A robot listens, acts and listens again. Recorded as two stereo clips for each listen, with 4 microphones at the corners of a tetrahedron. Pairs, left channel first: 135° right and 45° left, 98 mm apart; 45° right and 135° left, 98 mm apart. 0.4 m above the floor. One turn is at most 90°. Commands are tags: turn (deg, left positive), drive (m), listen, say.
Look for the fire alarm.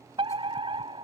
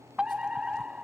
<turn deg="55"/>
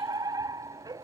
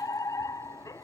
<say>Found it: a fire alarm, straight ahead.</say>